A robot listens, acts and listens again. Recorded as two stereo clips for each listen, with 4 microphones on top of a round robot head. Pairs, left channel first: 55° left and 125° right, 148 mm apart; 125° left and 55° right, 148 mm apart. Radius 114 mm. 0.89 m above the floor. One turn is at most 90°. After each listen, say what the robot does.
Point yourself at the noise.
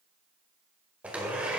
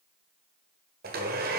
Turn 45° right.
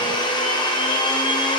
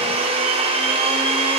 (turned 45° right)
Found it: a blender, straight ahead.